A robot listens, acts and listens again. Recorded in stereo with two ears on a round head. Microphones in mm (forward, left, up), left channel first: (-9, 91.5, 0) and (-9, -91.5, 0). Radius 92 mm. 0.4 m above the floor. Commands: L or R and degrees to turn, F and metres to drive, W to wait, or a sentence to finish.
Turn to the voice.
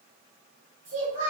R35
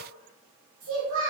R105
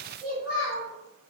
Facing the child speaking, 1 to 2 m away.